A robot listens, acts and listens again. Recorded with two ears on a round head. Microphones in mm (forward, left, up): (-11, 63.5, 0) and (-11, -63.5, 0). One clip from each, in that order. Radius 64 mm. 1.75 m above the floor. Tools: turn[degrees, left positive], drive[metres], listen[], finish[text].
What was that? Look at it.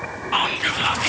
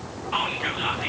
Thought: The whispering: about 35° left or 145° left.
Action: turn[35]
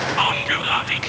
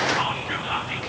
Thought: So it is at 110° left.
Action: turn[110]
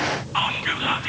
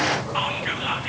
Thought: The whispering is now 10° left.
Action: turn[10]
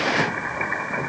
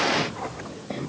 Action: listen[]
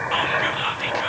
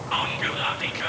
Action: finish[Found it: whispering, straight ahead, 1 to 2 m away.]